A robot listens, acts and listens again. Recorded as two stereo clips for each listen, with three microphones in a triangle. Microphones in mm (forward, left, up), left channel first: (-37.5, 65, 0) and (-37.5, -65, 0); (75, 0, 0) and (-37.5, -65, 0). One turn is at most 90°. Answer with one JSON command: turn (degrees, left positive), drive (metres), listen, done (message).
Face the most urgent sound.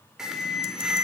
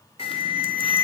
{"done": "Facing the alarm."}